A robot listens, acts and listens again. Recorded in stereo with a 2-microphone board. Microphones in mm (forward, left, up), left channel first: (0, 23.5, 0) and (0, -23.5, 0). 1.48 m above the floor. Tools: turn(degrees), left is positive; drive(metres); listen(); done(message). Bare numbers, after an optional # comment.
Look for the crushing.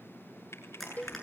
turn(30)
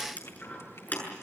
# So it is at 145° left.
turn(145)
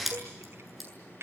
done("Facing the crushing, over 4 m away.")